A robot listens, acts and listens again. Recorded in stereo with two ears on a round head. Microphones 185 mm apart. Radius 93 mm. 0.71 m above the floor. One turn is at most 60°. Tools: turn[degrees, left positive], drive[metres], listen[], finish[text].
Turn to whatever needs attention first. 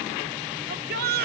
Thought: The shout: about 50° right or 130° right.
Action: turn[-50]
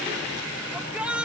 Action: finish[Found it: a shout, straight ahead.]